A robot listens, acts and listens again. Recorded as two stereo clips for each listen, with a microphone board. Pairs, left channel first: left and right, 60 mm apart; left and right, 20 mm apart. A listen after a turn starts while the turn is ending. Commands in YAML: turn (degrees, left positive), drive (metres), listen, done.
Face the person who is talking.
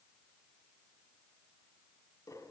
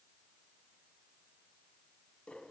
listen: true
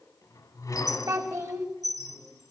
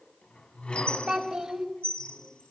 turn: -60
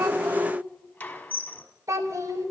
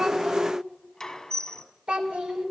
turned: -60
turn: -60
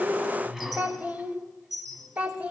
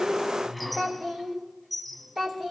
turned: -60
turn: -25
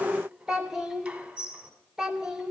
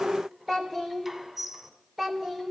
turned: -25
turn: -10
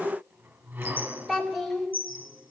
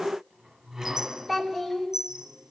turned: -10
done: "Found it: a child speaking, straight ahead."